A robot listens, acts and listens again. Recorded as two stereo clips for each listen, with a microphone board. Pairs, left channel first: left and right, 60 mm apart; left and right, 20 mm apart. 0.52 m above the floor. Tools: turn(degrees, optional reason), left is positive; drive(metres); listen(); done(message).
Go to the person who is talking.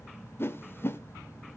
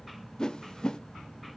listen()
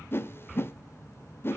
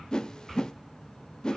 listen()
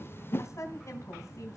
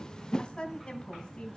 turn(degrees=55, reason="The woman speaking: about 55° left or 125° left.")
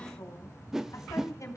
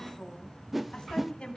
turn(degrees=70, reason="So it is at 70° left.")
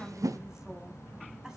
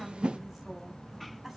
listen()
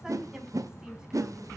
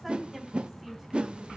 listen()
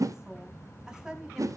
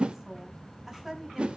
turn(degrees=-10, reason="The woman speaking is now 10° right.")
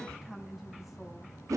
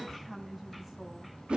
drive(metres=1.0)
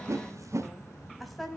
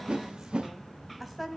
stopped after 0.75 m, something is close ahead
done("Blocked. The woman speaking is further on, straight ahead.")